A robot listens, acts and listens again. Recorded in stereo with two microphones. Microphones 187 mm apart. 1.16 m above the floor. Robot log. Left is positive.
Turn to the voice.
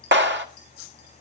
cmd idle
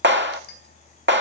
cmd idle
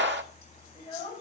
note: The child speaking: about 30° left or 150° left.
cmd yaw +30
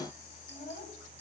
note: So it is at 120° left.
cmd yaw +120
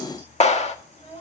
note: The child speaking is now 30° left.
cmd yaw +30
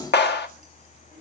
cmd idle
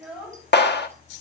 end: Found it: a child speaking, straight ahead, over 4 m away.